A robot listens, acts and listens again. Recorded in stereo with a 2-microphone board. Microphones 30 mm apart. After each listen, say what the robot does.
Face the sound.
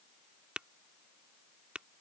Turn 35° right.
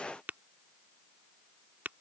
Turn 110° right.
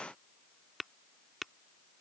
Found it: tapping, straight ahead.